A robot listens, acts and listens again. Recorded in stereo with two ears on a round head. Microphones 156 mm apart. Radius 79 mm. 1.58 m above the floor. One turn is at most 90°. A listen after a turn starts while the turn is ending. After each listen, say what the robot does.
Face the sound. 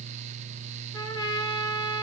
Turn 25° left.
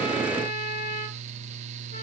Turn 90° left.
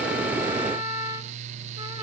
Turn 40° left.
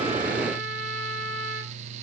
Facing the trumpet.